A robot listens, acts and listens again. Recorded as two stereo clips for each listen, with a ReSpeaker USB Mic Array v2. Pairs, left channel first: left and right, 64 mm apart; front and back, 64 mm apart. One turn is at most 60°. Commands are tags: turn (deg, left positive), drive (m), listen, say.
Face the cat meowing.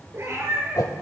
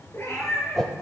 <turn deg="-40"/>
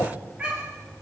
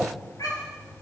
<turn deg="-20"/>
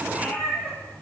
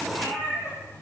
<turn deg="10"/>
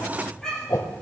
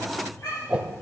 <turn deg="10"/>
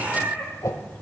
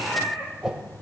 <say>Facing the cat meowing.</say>